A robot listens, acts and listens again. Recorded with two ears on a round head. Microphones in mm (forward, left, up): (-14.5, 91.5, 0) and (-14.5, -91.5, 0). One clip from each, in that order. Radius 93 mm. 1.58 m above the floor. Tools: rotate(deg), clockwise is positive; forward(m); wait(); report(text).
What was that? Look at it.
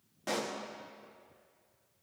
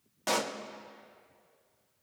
rotate(40)
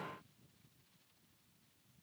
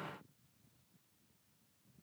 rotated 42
wait()
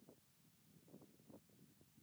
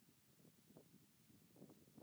report("I heard a pop, but can't make it out now. It was about 5° left or 100° right.")